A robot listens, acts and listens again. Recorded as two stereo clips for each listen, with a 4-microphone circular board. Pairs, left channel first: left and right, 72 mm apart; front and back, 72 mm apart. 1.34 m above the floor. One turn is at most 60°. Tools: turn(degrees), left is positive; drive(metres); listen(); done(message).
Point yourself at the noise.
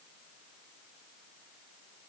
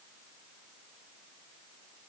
listen()
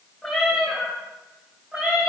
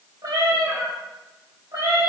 turn(degrees=-60)
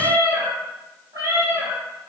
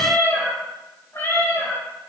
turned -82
turn(degrees=-50)
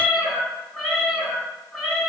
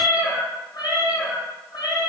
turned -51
done("Facing the cat meowing, 2 to 4 m away.")